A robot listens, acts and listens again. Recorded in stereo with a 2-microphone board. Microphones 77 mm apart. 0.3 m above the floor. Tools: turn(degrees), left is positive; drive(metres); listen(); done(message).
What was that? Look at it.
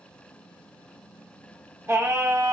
turn(degrees=-40)
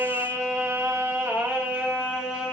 turn(degrees=-15)
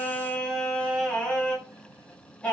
turn(degrees=15)
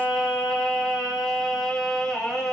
done("Found it: singing, straight ahead, 1 to 2 m away.")